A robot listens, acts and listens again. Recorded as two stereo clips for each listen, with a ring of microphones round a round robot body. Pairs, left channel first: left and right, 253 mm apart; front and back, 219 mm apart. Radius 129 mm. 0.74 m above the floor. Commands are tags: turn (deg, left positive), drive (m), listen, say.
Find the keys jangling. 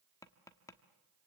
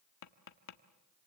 <listen/>
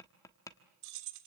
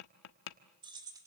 <turn deg="-105"/>
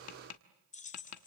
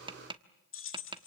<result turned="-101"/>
<turn deg="30"/>
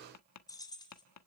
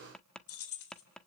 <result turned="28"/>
<turn deg="15"/>
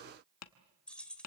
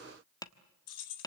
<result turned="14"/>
<say>Found it: keys jangling, straight ahead.</say>